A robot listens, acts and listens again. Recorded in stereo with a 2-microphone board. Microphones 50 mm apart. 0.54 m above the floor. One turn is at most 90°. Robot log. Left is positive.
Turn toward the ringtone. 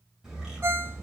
note: The ringtone: about 65° right or 115° right.
cmd yaw -65
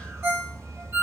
note: So it is at 50° right.
cmd yaw -50
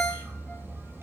end: Found it: a ringtone, straight ahead, 1 to 2 m away.